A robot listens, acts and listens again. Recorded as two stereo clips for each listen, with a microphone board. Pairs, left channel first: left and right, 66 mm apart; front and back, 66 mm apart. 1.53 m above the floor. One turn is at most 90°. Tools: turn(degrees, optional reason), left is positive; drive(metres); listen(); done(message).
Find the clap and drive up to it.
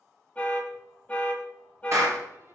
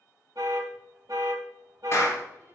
turn(degrees=-45, reason="The clap: 45° right.")
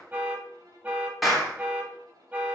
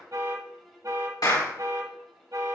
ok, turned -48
drive(metres=1.0)
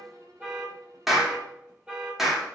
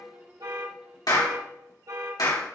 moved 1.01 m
drive(metres=1.0)
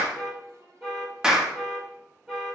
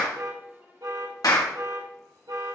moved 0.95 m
turn(degrees=-10, reason="The clap is now 10° right.")
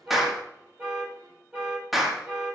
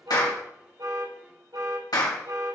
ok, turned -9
drive(metres=1.0)
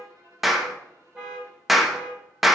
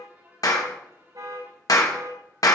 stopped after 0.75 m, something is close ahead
done("I am next to the clap.")